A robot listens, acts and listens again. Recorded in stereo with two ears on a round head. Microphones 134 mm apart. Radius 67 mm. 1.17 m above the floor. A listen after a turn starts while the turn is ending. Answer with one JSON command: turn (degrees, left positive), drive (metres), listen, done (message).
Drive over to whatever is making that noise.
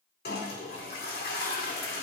{"turn": 75}
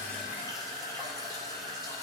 {"turn": 25}
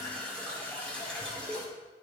{"drive": 1.0}
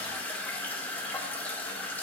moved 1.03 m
{"turn": 10}
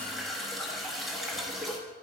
{"drive": 1.0}
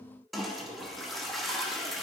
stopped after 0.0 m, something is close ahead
{"done": "Arrived at the toilet flushing, straight ahead."}